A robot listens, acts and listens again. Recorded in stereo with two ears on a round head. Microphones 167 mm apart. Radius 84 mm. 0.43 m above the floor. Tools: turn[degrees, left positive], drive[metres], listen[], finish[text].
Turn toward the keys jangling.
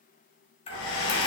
Thought: The keys jangling: about 30° left or 150° left.
Action: turn[30]
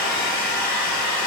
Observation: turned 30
Action: listen[]
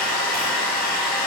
Action: listen[]
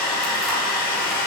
Action: finish[I heard keys jangling, but can't make it out now. It was about straight ahead or 120° left.]